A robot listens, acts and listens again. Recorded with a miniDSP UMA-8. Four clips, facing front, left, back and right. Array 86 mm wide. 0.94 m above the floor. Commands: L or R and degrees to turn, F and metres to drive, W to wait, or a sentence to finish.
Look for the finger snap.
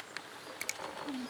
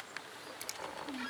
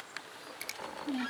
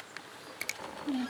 R75
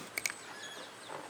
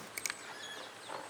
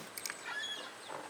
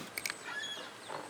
R15
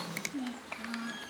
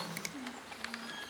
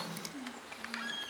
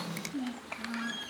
W
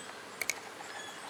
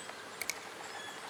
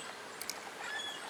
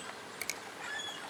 Facing the finger snap, 1 to 2 m away.